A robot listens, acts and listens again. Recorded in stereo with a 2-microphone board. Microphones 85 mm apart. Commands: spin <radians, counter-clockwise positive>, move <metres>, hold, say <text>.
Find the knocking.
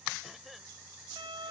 hold
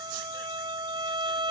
hold
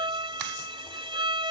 say I can't make out knocking to turn to.